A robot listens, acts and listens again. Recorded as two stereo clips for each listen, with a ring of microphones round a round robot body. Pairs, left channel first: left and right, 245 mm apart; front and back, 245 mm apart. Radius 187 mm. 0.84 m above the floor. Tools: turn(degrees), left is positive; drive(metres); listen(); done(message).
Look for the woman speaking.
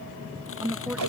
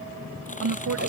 turn(degrees=-175)
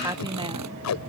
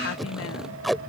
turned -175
turn(degrees=-20)
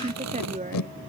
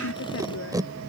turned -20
turn(degrees=-30)
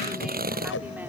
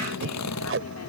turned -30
listen()
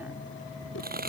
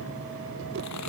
listen()
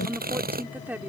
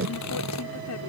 done("Facing the woman speaking.")